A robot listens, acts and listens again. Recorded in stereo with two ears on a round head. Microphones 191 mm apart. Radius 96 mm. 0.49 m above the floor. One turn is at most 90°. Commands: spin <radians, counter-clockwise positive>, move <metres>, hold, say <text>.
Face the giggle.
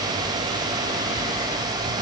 hold
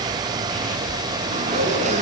hold
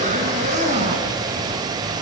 say I can't make out a giggle to turn to.